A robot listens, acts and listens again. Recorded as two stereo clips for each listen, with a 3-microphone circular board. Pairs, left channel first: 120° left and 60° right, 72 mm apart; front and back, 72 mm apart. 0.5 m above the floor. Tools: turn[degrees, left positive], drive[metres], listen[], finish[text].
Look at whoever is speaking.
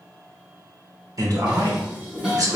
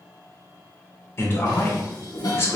Thought: The man speaking: 45° right.
Action: turn[-45]
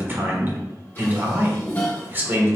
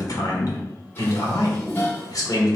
Action: finish[Found it: a man speaking, straight ahead.]